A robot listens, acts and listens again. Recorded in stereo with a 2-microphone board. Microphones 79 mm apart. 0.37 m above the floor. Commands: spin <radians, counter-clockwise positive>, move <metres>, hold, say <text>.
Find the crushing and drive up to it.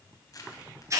spin 0.87
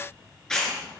move 1.0
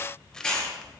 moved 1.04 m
spin 0.17
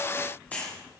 move 1.0
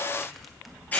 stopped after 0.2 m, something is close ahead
say Arrived at the crushing, straight ahead.